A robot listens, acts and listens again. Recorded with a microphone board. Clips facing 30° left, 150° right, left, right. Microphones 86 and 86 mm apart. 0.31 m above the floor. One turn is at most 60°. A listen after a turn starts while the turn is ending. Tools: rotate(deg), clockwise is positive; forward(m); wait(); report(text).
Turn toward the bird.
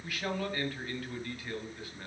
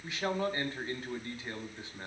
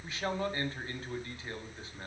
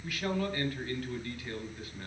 wait()
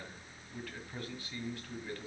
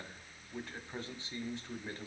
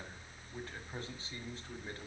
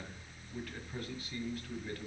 wait()
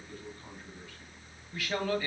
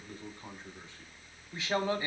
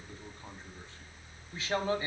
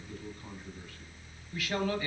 report("I can't make out a bird to turn to.")